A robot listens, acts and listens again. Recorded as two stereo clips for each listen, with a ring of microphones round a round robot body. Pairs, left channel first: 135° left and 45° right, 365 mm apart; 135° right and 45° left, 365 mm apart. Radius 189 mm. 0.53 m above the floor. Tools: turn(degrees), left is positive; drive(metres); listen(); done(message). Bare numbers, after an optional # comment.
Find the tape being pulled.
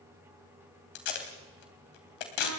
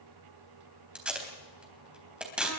# The tape being pulled: 130° left.
turn(130)
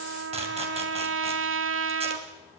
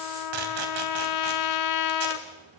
listen()
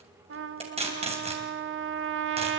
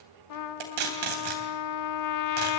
# The tape being pulled is now 30° left.
turn(30)
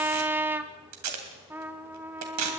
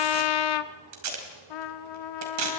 done("Facing the tape being pulled.")